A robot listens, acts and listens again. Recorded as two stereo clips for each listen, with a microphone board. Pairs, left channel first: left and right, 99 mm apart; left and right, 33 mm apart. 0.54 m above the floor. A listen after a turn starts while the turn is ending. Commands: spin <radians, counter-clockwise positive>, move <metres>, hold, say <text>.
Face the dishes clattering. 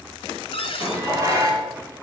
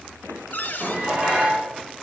spin -0.52
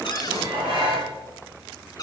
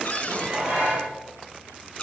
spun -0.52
spin -2.09
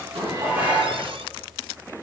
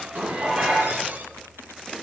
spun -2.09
spin -0.26
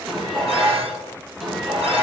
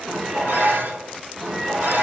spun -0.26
say Found it: dishes clattering, straight ahead, 2 to 4 m away.